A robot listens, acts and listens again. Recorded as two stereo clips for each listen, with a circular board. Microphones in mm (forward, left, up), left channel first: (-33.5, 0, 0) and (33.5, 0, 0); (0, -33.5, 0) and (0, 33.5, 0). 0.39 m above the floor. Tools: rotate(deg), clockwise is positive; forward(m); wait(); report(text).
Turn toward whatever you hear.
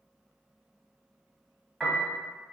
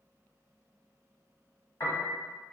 rotate(95)
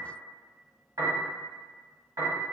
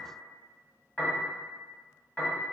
rotate(20)
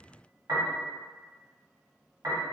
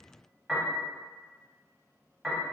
report("Found it: a piano, straight ahead, under 1 m away.")